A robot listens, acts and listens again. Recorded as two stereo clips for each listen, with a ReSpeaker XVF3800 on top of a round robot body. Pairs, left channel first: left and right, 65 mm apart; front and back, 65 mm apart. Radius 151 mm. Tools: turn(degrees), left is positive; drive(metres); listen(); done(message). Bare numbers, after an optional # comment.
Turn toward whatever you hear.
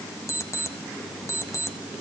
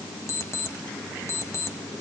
# The alarm clock: 45° left.
turn(45)
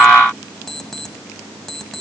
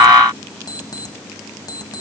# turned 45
done("Found it: an alarm clock, straight ahead, 1 to 2 m away.")